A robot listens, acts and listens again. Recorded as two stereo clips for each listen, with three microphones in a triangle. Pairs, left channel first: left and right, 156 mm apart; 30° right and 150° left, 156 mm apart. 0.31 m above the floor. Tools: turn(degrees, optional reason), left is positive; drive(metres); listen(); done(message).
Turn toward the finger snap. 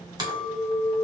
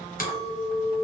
listen()
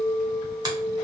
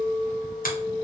turn(degrees=-30, reason="The finger snap: 30° right.")
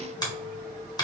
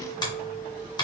turn(degrees=30, reason="The finger snap is now 30° left.")
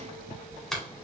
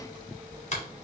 done("Facing the finger snap, 1 to 2 m away.")